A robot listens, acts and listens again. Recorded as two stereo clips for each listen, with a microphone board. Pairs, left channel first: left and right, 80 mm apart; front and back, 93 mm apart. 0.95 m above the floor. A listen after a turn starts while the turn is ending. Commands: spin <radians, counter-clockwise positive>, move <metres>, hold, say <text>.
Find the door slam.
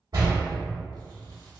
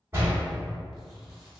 spin -2.09
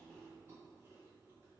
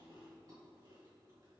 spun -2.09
say Facing where the door slam came from. I can't hear it now.